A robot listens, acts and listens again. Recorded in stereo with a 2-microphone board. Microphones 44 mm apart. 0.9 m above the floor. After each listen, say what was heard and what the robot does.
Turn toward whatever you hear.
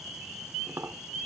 The tapping: about 70° right or 110° right. Turn 70° right.
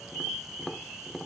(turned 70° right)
Facing the tapping.